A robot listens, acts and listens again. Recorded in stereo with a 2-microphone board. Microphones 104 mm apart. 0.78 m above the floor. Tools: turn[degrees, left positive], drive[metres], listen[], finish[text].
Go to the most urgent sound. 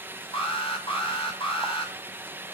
Thought: The alarm: about 65° left or 115° left.
Action: turn[65]
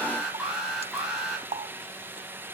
Action: drive[1.0]
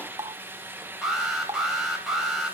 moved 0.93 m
Action: drive[1.0]
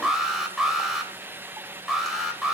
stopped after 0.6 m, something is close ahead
Action: finish[Something is in my way. I am facing the alarm but have not reached it.]